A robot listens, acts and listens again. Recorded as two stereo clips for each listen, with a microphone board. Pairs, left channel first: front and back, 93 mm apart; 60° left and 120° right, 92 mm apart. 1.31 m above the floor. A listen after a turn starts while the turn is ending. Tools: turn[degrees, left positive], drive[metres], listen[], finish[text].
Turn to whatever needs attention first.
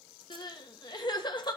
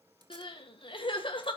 Thought: The crying: 35° left.
Action: turn[35]
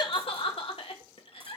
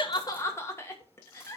Action: finish[Found it: crying, straight ahead, 1 to 2 m away.]